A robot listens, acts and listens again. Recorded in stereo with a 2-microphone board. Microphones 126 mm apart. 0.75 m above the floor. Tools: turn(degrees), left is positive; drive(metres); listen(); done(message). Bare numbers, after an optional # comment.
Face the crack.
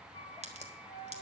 # The crack: about 65° right or 115° right.
turn(-65)
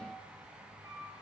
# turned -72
listen()
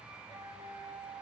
done("I heard a crack, but can't make it out now. It was about 10° left or 45° right.")